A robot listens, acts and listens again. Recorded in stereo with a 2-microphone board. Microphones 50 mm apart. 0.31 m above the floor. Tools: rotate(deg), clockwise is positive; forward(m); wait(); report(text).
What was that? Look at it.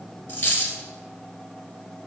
rotate(-40)
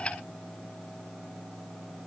wait()
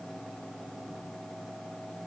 report("I heard a dropped coin, but can't make it out now. It was about straight ahead or 100° left.")